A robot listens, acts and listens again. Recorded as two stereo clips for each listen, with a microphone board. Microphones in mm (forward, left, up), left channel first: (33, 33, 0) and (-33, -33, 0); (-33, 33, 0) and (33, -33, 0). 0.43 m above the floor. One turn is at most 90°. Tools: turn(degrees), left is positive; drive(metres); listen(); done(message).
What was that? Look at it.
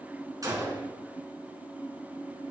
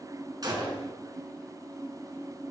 turn(degrees=-85)
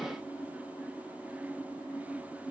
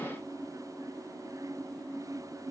done("Facing where the gunshot came from. I can't hear it now.")